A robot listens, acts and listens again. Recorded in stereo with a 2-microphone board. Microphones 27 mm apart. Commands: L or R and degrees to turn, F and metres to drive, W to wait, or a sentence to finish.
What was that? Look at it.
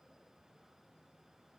W
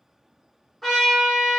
R30
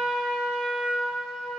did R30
R145
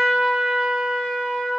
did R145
L10
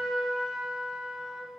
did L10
Found it: a trumpet, straight ahead.